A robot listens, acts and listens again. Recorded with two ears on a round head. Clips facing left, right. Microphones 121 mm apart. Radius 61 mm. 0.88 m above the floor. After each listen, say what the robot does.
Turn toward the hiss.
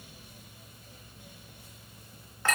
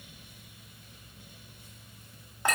Keep listening.
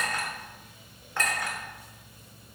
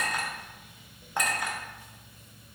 Keep listening.
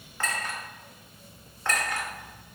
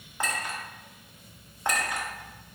I can't make out a hiss, only a clink.